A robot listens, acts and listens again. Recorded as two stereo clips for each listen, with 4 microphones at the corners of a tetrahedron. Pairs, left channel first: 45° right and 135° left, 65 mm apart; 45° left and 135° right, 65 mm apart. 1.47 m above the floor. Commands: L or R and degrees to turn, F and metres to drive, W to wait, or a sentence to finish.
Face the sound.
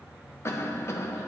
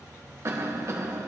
R90
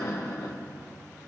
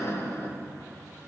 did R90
Found it: a cough, straight ahead.